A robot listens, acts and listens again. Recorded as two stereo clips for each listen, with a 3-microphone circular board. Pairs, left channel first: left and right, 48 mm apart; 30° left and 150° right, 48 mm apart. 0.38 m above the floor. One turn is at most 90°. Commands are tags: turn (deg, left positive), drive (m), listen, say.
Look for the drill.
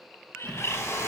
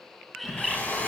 <turn deg="85"/>
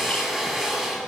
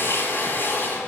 <turn deg="-10"/>
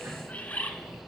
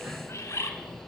<listen/>
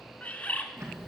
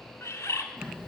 <listen/>
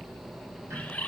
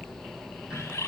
<say>I heard a drill from this way, but can't make it out now.</say>